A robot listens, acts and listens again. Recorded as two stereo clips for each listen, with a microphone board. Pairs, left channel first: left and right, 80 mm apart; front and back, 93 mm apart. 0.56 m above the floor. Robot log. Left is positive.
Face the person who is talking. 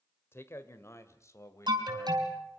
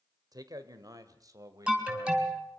note: The man speaking: 135° left.
cmd yaw +135
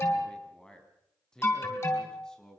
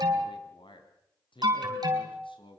note: The man speaking is now 10° left.
cmd yaw +10
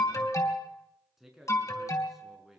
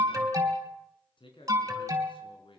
end: Facing the man speaking, over 4 m away.